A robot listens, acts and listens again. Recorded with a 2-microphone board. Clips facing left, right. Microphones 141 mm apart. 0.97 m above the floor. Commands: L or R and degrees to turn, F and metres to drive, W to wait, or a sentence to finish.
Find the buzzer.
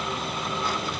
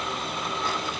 W
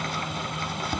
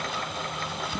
W
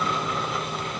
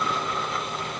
I can't make out a buzzer, only chopping.